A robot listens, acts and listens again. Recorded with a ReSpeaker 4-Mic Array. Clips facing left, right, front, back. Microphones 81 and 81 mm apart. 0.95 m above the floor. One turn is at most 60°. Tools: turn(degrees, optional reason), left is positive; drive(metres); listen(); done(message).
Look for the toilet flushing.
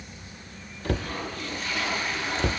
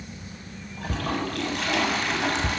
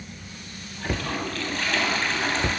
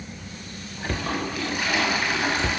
turn(degrees=-60, reason="The toilet flushing: 100° right.")
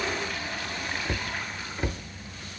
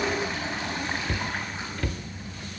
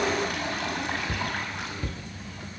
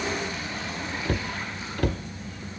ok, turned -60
turn(degrees=-25, reason="The toilet flushing is now 25° right.")
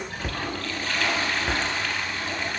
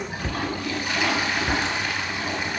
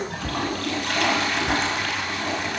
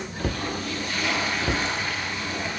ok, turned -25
turn(degrees=-15, reason="The toilet flushing is now 15° right.")
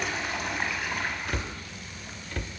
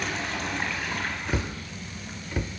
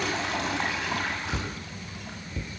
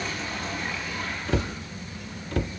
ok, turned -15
done("Facing the toilet flushing, over 4 m away.")